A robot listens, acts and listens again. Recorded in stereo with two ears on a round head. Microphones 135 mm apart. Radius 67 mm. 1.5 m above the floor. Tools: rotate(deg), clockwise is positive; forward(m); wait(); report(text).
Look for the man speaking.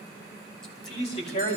rotate(-45)
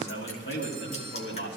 rotate(-90)
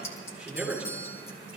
report("Facing the man speaking, over 4 m away.")